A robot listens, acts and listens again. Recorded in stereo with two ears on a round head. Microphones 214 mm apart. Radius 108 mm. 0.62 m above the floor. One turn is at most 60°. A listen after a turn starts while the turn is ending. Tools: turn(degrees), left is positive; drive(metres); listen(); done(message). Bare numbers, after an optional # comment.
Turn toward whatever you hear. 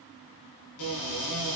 turn(60)
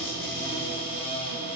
# So it is at 25° left.
turn(25)
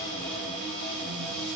done("Found it: a cupboard door, straight ahead.")